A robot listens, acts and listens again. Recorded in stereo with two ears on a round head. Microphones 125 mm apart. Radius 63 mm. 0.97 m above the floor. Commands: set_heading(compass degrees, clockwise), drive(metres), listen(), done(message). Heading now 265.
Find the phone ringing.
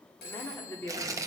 set_heading(175)
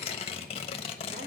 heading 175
listen()
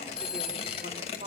done("Found it: a phone ringing, straight ahead.")